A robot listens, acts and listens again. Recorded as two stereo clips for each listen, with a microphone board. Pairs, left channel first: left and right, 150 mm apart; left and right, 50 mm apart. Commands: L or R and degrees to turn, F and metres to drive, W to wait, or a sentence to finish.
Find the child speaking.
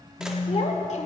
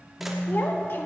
L55
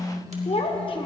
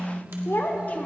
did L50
L35
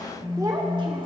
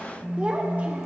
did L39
R30
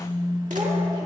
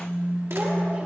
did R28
W
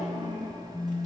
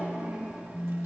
R40
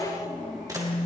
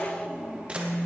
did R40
R10
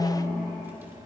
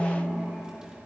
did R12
W
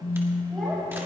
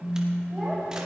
Facing the child speaking, 2 to 4 m away.